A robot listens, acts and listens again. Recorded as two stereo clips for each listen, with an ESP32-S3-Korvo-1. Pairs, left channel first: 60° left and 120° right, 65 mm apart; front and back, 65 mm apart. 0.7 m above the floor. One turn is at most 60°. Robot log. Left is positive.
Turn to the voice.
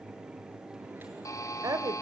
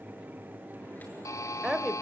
note: The woman speaking: 95° right.
cmd yaw -60
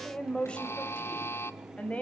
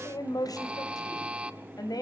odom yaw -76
note: The woman speaking is now 10° right.
cmd yaw -10
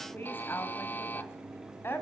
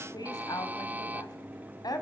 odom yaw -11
end: Facing the woman speaking, over 4 m away.